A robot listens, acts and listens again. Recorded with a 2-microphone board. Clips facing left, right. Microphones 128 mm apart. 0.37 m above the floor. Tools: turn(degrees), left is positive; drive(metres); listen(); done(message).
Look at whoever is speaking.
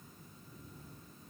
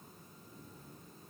listen()
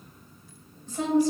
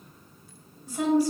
turn(degrees=-30)
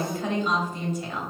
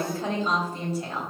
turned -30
turn(degrees=-140)
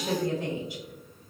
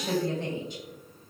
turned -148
turn(degrees=10)
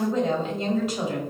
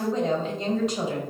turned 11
done("Found it: a woman speaking, straight ahead, 1 to 2 m away.")